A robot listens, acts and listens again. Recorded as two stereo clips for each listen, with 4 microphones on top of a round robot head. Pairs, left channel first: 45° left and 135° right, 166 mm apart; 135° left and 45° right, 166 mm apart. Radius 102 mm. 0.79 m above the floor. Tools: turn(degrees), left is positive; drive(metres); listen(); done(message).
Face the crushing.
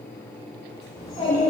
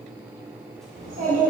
listen()
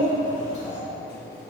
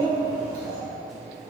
listen()
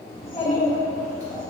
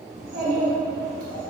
done("I can't make out crushing, only a child speaking.")